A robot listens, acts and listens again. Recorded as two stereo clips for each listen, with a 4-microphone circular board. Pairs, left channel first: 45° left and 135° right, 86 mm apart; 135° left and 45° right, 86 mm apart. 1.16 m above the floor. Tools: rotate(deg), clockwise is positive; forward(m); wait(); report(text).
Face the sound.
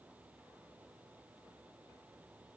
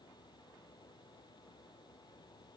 wait()
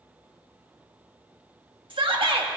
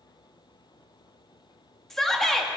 rotate(140)
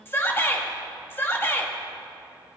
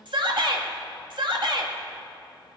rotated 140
rotate(20)
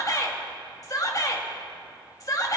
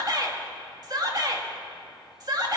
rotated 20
report("Found it: a shout, straight ahead, 1 to 2 m away.")